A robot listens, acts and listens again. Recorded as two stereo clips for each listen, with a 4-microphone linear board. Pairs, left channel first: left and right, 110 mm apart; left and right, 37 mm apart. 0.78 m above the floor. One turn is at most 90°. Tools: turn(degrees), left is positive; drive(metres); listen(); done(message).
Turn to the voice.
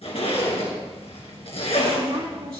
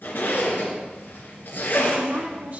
turn(degrees=-55)
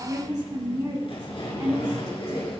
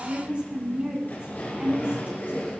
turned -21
turn(degrees=-50)
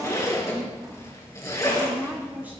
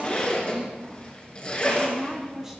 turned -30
turn(degrees=-20)
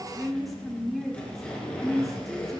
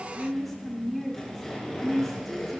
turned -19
done("Found it: a woman speaking, straight ahead.")